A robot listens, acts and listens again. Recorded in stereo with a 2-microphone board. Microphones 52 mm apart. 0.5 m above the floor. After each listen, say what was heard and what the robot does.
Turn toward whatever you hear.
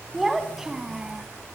Turn 30° right.
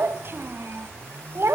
So it is at 120° right. Turn 120° right.
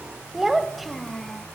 Facing the child speaking.